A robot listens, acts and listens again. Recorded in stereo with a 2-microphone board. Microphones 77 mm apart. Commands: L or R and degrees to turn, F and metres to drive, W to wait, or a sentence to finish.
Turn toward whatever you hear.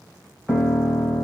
R30
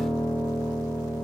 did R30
R145
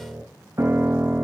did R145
R45
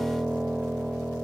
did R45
R10
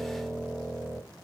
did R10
Found it: a piano, straight ahead.